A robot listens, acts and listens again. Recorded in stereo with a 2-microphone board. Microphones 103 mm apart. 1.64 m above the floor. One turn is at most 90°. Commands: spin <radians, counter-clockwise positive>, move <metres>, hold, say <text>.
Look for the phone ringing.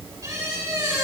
hold
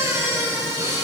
hold
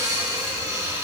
say I can't make out a phone ringing, only a squeak.